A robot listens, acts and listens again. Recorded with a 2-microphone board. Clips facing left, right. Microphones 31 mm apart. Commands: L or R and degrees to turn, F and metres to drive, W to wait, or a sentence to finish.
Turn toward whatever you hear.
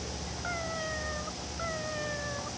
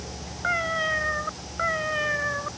R90
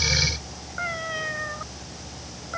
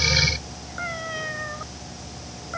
Found it: a cat meowing, straight ahead.